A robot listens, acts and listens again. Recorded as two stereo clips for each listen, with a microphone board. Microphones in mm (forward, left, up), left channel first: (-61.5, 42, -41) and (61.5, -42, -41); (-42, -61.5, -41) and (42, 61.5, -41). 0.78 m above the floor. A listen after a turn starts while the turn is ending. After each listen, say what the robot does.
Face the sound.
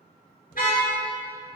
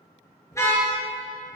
Turn 165° left.
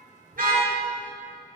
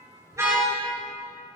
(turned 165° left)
Turn 30° right.
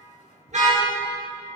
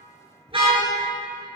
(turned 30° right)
Found it: a car horn, straight ahead.